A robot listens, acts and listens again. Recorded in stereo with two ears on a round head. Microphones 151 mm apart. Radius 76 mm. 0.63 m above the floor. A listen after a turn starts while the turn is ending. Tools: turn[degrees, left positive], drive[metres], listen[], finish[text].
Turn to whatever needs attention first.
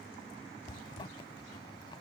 Action: listen[]
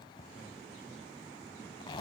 Action: listen[]
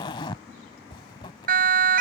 Thought: The siren: about 60° right or 120° right.
Action: turn[-60]
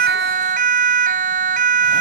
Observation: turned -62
Thought: So it is at 55° right.
Action: turn[-55]
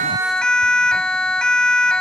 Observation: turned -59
Action: finish[Facing the siren.]